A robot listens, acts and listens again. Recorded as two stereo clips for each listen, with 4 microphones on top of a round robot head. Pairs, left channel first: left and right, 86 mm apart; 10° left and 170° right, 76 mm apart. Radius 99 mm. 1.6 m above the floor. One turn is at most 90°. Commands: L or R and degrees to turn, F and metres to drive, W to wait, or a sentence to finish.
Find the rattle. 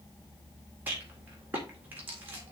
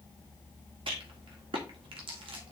R90
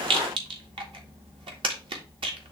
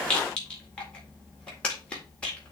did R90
R65
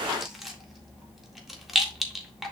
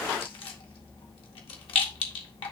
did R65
Facing the rattle.